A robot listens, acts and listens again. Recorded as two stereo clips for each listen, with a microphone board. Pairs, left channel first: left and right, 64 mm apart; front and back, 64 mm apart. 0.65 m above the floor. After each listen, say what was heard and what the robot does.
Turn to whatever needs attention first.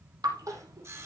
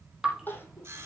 The crying: 60° right. Turn 60° right.
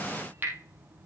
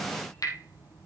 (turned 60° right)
Keep listening.
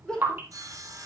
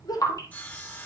The crying is now 10° left. Turn 10° left.
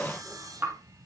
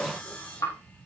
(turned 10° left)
Keep listening.
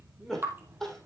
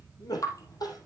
Found it: crying, straight ahead, 2 to 4 m away.